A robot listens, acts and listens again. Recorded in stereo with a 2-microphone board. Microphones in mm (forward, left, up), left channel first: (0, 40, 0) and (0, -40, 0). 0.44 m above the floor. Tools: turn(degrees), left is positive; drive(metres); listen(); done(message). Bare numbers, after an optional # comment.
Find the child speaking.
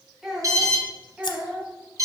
turn(-30)
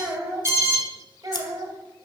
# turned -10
# The child speaking: about 55° right or 125° right.
turn(-55)
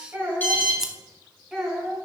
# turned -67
# So it is at 10° right.
turn(-10)
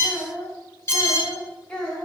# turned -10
done("Found it: a child speaking, straight ahead, 2 to 4 m away.")